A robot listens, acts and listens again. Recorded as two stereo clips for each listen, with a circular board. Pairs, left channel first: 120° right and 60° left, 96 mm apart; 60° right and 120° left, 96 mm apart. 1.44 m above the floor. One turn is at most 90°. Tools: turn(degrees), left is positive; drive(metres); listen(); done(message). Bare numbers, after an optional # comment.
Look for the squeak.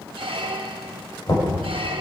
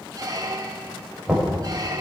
# The squeak: 70° left.
turn(70)
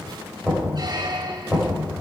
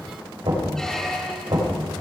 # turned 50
# Nothing new. It was at 20° left.
turn(20)
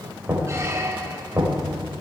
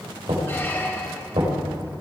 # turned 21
listen()
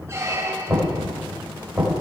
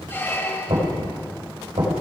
done("Facing the squeak.")